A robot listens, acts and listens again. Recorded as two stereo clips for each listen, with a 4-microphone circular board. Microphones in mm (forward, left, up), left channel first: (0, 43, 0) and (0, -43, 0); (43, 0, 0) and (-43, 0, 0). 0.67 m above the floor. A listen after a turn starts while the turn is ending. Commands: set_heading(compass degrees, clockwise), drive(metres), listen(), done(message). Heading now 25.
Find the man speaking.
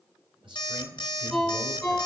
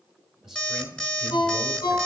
set_heading(120)
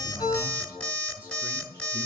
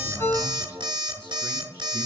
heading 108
set_heading(123)
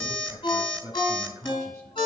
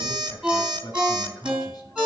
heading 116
set_heading(146)
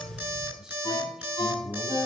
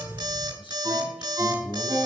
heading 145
done("Found it: a man speaking, straight ahead.")